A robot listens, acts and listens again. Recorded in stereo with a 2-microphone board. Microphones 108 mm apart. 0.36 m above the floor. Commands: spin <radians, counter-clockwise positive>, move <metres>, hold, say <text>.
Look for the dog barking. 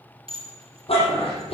spin 1.05
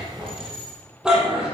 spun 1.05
spin -0.17
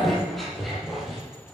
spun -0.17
say Facing the dog barking, over 4 m away.